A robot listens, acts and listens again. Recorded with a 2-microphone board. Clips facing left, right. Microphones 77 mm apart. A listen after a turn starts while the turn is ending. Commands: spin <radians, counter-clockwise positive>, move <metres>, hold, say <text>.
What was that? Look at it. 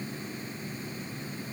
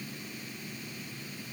hold
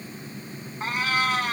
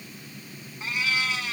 spin 0.87
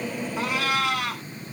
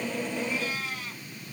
spin 1.31
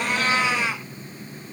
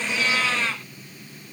spin 0.26
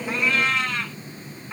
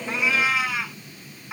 spin -0.17
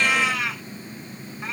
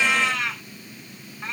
say Found it: a cat meowing, straight ahead.